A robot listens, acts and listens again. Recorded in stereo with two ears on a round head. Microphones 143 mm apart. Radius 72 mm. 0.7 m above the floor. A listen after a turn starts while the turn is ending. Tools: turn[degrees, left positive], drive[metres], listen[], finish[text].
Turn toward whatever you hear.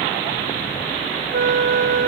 Thought: The flute: about 45° right or 135° right.
Action: turn[-45]
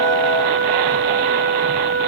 Thought: So it is at 80° right.
Action: turn[-80]
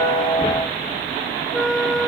Action: finish[Facing the flute.]